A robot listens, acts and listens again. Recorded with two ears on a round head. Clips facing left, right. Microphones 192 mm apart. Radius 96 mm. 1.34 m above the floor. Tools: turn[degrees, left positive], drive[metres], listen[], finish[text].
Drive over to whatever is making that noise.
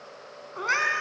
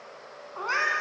Thought: The cat meowing: about 25° left or 155° left.
Action: turn[25]
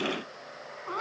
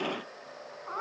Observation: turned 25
Thought: So it is at 125° left.
Action: turn[125]
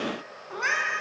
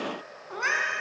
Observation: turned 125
Action: drive[1.0]
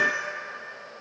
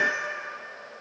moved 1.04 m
Action: drive[1.0]
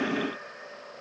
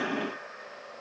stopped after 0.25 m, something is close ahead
Action: listen[]
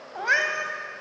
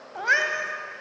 Action: finish[I am next to the cat meowing.]